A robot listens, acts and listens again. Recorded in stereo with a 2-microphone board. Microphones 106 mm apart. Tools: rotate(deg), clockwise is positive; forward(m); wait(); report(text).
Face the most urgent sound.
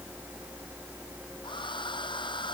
wait()
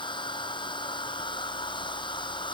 wait()
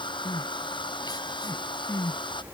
rotate(-40)
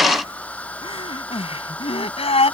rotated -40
rotate(-100)
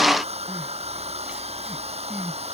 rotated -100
wait()
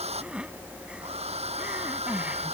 rotate(10)
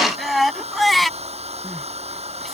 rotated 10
report("Found it: crying, straight ahead.")